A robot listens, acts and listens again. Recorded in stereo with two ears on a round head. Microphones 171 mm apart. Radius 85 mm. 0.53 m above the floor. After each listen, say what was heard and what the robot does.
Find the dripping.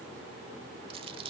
Keep listening.
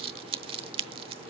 Keep listening.
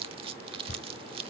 The dripping: about 60° left or 120° left. Turn 60° left.
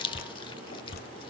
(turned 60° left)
So it is at 55° left. Turn 55° left.
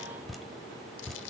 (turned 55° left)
Found it: dripping, straight ahead.